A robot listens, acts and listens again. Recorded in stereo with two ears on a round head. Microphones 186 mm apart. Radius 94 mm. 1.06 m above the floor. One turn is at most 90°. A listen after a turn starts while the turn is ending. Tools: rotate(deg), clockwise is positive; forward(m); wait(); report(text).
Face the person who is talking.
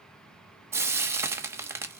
wait()
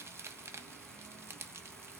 wait()
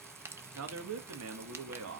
rotate(90)
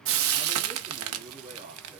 rotate(25)
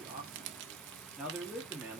report("Facing the man speaking, 1 to 2 m away.")